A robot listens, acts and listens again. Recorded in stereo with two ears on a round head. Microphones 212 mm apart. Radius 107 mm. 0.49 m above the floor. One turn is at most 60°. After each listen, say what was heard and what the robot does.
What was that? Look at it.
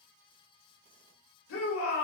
The shout: about 60° left or 120° left. Turn 60° left.
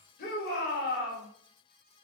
So it is at 45° left. Turn 45° left.
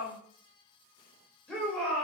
Facing the shout.